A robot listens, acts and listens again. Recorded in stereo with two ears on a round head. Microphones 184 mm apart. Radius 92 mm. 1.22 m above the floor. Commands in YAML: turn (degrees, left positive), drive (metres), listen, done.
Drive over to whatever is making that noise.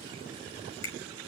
turn: 65
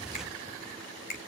turn: 50
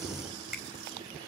drive: 1.0
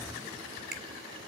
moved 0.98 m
drive: 1.0
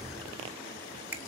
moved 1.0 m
turn: -10
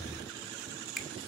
drive: 1.0
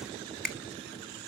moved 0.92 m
drive: 1.0
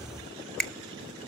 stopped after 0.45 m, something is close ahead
done: "I am next to the finger snap."